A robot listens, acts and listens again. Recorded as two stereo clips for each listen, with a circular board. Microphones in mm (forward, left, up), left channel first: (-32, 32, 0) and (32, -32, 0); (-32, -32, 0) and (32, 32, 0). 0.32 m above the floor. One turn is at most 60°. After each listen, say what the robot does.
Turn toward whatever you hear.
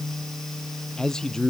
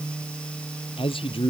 Turn 60° right.
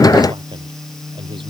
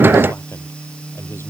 Turn 60° right.
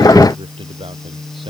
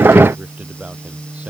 Turn 30° right.
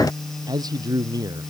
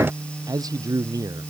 Facing the man speaking.